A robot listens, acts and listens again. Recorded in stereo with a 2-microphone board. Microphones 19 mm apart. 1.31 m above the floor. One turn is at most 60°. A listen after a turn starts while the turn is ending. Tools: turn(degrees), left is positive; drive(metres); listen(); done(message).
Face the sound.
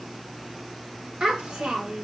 turn(degrees=-60)
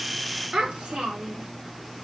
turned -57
turn(degrees=-60)
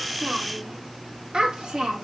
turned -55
turn(degrees=-40)
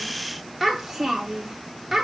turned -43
turn(degrees=-15)
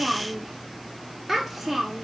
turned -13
done("Found it: a child speaking, straight ahead.")